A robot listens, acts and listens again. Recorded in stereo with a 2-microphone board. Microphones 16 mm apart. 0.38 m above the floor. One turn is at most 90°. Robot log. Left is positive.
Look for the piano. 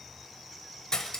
cmd idle
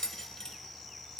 cmd idle
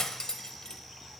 end: I can't make out a piano, only cutlery clinking.